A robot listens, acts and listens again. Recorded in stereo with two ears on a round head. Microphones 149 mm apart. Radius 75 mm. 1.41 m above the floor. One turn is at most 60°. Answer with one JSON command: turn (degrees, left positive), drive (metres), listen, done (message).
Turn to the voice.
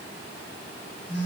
{"listen": true}
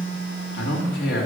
{"turn": 60}
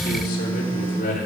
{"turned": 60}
{"turn": 45}
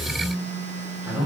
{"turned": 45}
{"turn": -10}
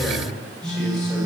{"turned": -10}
{"listen": true}
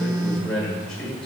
{"done": "Facing the man speaking."}